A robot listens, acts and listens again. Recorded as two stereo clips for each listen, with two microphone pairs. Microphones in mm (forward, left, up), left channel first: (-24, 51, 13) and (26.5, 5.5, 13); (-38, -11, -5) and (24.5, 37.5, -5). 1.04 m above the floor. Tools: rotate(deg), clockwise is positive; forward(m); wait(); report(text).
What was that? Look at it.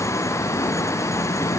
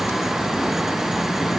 wait()
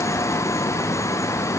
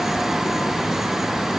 wait()
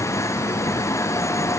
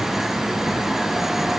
report("I can't make out anything to turn to.")